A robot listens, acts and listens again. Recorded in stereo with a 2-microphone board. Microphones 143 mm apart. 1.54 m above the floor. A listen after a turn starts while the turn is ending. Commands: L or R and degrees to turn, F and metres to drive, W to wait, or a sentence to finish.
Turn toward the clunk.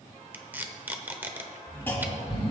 L30
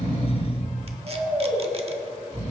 W
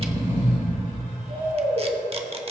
I heard a clunk, but can't make it out now. It was about 15° right or 135° left.